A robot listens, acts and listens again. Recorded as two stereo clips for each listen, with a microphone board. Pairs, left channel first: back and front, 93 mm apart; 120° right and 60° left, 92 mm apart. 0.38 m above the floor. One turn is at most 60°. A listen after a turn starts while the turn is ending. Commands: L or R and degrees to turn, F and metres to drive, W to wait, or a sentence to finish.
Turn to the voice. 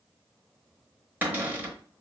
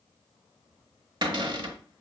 W
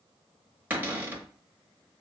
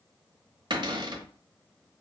W
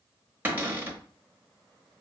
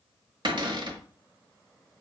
I can't make out anyone speaking, only a cupboard door.